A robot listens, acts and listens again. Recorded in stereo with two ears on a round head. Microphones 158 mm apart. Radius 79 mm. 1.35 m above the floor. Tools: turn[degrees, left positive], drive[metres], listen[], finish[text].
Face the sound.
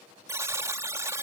Thought: The buzzer: about 15° right or 165° right.
Action: turn[-15]
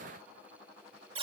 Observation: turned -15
Thought: So it is at 150° right.
Action: turn[-150]
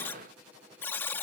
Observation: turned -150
Thought: The buzzer is now 10° left.
Action: turn[10]
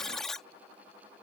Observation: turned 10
Action: finish[Facing the buzzer.]